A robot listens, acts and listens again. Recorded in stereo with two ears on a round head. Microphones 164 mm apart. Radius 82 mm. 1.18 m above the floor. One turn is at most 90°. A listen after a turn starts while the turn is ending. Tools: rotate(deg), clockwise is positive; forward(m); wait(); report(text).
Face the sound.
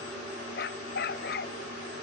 rotate(-60)
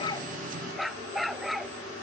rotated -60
report("Found it: a dog barking, straight ahead.")